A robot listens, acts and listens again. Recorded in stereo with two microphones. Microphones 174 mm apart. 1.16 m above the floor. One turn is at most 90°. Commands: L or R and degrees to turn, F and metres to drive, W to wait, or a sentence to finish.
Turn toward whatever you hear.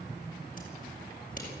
W
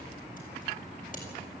W
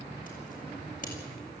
L55
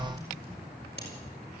L75
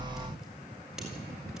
Found it: scissors, straight ahead.